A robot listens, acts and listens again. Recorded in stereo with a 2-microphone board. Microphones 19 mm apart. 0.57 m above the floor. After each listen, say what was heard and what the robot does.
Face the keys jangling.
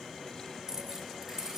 The keys jangling: about 30° right or 150° right. Turn 30° right.
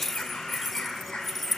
Found it: keys jangling, straight ahead.